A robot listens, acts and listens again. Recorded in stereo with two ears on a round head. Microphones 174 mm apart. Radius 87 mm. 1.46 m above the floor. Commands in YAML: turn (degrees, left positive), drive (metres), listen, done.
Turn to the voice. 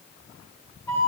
listen: true
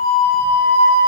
listen: true
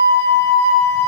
done: "I can't make out anyone speaking, only a flute."